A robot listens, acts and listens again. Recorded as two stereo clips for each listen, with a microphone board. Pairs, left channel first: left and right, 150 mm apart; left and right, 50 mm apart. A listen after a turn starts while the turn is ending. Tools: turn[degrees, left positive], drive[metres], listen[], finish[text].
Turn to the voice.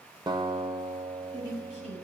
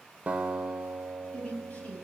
Thought: The woman speaking: about 40° left or 140° left.
Action: turn[40]
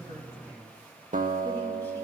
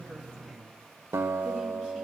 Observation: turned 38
Action: listen[]
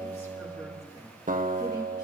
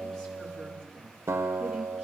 Action: listen[]
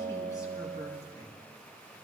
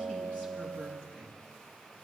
Thought: So it is at 25° left.
Action: turn[25]
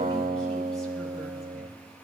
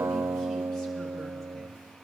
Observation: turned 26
Action: listen[]
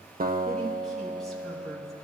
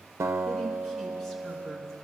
Action: listen[]
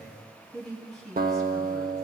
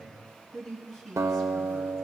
Action: finish[Found it: a woman speaking, straight ahead, over 4 m away.]